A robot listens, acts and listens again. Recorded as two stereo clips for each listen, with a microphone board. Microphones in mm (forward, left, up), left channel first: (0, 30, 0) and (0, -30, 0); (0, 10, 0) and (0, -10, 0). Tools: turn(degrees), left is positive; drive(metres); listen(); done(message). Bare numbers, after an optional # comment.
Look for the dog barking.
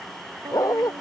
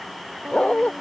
turn(90)
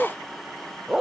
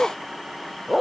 done("Facing the dog barking.")